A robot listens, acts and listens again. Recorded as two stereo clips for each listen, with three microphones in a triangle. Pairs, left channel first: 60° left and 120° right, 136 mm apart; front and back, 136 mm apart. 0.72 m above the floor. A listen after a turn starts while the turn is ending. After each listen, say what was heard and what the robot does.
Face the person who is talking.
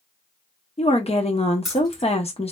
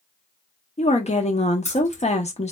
The woman speaking: 25° left. Turn 25° left.
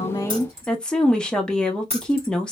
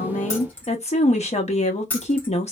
The woman speaking is now 25° right. Turn 25° right.
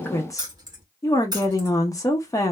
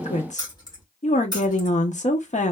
Found it: a woman speaking, straight ahead, under 1 m away.